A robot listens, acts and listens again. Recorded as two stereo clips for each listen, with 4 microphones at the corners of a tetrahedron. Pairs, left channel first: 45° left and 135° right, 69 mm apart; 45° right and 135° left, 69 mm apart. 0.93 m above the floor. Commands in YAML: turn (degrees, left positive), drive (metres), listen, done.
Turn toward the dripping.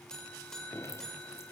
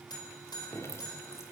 done: "Facing the dripping, 2 to 4 m away."